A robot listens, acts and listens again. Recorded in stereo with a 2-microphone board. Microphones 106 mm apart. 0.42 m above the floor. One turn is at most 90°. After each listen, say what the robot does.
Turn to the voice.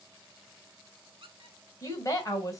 Turn 35° left.
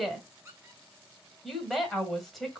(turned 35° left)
Found it: a woman speaking, straight ahead.